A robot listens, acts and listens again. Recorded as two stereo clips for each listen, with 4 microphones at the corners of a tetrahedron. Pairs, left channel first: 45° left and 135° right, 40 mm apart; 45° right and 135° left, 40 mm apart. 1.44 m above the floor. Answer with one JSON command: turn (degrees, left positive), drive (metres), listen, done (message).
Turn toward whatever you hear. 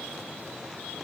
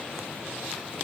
{"listen": true}
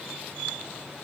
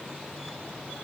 {"listen": true}
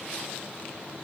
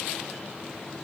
{"done": "I can't make out anything to turn to."}